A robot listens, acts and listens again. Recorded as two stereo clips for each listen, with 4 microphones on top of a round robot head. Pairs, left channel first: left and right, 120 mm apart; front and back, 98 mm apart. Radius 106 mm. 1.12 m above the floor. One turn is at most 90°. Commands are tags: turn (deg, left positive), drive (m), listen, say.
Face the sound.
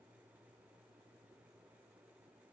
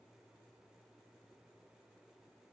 <listen/>
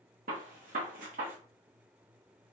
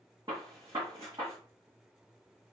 <turn deg="-90"/>
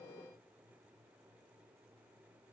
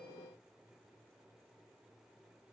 <turn deg="-25"/>
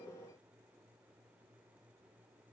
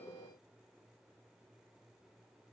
<say>Facing where the gunshot came from. I can't hear it now.</say>